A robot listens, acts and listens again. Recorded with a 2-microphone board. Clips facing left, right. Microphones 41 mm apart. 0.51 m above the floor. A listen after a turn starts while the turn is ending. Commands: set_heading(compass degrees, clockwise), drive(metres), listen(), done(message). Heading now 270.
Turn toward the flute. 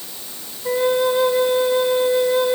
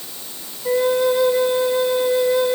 set_heading(250)
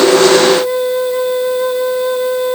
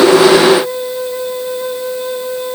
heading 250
set_heading(110)
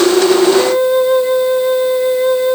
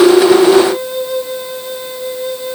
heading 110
set_heading(80)
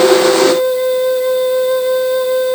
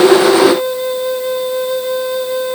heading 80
done("Found it: a flute, straight ahead, 1 to 2 m away.")